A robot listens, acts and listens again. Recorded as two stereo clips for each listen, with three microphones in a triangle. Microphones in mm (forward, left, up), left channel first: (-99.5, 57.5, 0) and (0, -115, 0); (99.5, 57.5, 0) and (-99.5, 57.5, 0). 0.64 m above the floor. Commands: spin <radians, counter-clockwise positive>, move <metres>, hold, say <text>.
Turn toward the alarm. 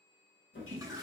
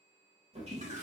hold
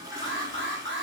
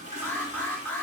spin -1.40
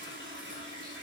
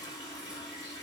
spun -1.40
hold
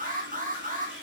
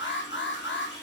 spin -0.26
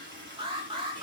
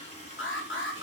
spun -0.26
say Facing the alarm, under 1 m away.